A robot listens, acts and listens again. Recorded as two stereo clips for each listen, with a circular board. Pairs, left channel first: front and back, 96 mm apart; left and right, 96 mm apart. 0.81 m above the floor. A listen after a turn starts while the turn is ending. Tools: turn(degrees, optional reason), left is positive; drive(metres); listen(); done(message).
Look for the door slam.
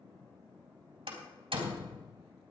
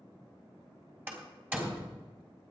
turn(degrees=-160, reason="The door slam: 160° right.")
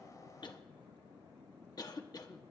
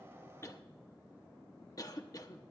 done("I heard a door slam from this way, but can't make it out now.")